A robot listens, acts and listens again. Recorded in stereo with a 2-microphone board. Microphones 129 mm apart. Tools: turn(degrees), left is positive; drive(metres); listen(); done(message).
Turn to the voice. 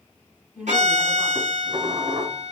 turn(degrees=-30)
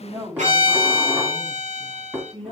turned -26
turn(degrees=-125)
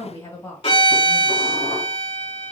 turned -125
turn(degrees=30)
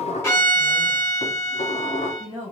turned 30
done("Facing the woman speaking.")